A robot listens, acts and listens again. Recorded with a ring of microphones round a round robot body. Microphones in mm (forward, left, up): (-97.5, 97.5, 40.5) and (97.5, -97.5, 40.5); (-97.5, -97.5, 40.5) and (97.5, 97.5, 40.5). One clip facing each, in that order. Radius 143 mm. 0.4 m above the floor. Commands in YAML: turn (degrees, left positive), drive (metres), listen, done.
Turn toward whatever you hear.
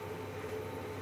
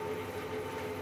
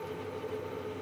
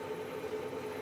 listen: true
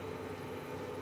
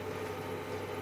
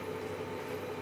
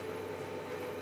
listen: true
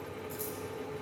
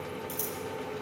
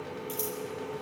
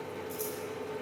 turn: -90
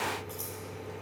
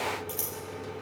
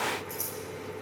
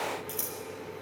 turn: 10
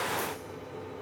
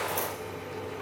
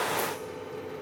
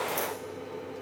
listen: true
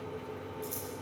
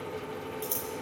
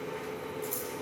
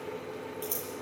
done: "Facing the scissors, over 4 m away."